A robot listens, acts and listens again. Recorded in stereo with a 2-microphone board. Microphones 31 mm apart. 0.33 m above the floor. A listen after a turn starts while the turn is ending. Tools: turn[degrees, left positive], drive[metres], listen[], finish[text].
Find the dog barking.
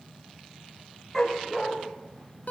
Action: turn[30]
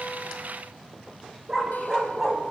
Thought: So it is at 20° right.
Action: turn[-20]
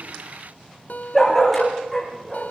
Action: finish[Facing the dog barking, over 4 m away.]